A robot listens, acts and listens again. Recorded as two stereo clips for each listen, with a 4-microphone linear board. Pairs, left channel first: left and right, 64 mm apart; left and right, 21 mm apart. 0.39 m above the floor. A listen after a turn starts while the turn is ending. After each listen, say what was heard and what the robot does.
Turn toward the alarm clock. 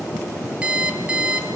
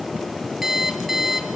The alarm clock: about 20° right or 160° right. Turn 20° right.
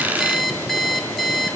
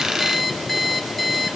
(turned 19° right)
Facing the alarm clock, 2 to 4 m away.